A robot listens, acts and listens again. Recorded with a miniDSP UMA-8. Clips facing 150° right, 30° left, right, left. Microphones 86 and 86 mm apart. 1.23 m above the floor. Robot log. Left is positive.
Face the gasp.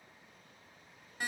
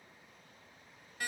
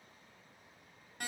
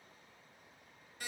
cmd idle
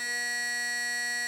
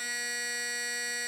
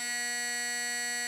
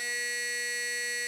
cmd idle
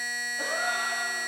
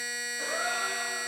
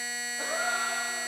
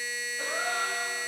note: The gasp: 155° right.
cmd yaw -155
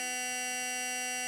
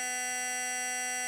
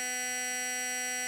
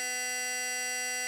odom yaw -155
end: Facing where the gasp came from. I can't hear it now.